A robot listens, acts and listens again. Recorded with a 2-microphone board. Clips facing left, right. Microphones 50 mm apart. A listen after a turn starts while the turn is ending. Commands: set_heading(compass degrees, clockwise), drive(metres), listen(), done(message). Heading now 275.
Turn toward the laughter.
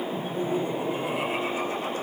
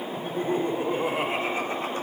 set_heading(310)
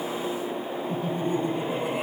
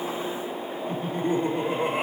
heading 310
set_heading(75)
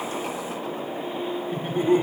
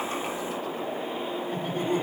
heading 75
set_heading(55)
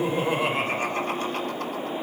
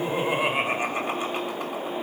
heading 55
set_heading(70)
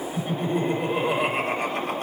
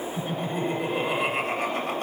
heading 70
done("Found it: laughter, straight ahead, 2 to 4 m away.")